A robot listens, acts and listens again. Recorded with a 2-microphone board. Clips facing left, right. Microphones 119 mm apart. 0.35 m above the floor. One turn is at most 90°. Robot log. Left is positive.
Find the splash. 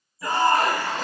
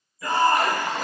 note: The splash: about 15° right or 165° right.
cmd yaw -15
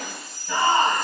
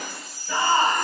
note: So it is at 150° right.
cmd yaw -90
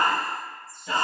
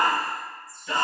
note: Nothing new. It was at 60° right.
cmd yaw -60
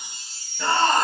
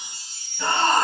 end: I heard a splash from this way, but can't make it out now.